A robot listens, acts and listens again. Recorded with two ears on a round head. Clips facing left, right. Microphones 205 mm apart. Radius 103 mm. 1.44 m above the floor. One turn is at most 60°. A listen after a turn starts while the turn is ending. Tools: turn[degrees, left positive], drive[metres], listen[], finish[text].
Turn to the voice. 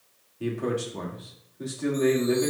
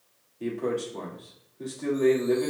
Action: turn[30]
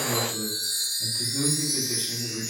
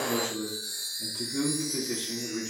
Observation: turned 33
Thought: So it is at 30° right.
Action: turn[-30]
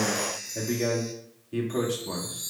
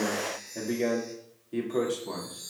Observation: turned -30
Action: finish[Found it: a man speaking, straight ahead, 2 to 4 m away.]